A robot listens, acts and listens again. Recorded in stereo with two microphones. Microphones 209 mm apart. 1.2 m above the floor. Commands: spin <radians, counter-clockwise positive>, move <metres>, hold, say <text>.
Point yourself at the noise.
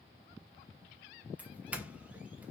spin -0.52
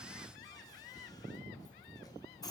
spin 0.35
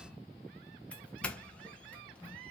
say Facing the doorbell.